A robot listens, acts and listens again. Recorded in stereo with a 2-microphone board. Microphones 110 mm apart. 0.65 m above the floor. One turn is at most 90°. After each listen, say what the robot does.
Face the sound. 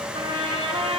Turn 45° right.
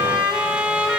Turn 15° right.
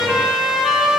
Found it: a trumpet, straight ahead.